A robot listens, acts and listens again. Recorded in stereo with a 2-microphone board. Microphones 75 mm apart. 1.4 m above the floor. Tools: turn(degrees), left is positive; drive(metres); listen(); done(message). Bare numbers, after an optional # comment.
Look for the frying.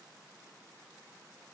listen()
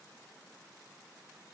listen()
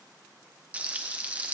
# The frying: about 20° right or 160° right.
turn(-20)
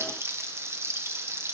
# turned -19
# So it is at 145° right.
turn(-145)
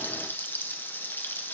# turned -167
# The frying is now 30° left.
turn(30)
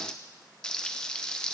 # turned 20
# The frying is now 10° left.
turn(10)
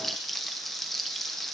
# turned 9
done("Found it: frying, straight ahead, under 1 m away.")